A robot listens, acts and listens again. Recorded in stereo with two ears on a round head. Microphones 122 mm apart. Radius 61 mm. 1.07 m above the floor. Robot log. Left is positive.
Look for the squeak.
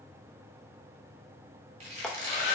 note: The squeak: about 45° right or 135° right.
cmd yaw -45
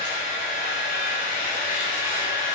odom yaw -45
cmd idle
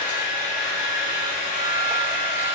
cmd idle
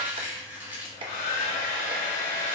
note: So it is at 15° right.
cmd yaw -15
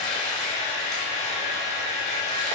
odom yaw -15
cmd idle
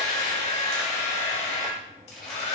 cmd idle
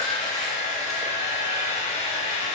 end: I heard a squeak from this way, but can't make it out now.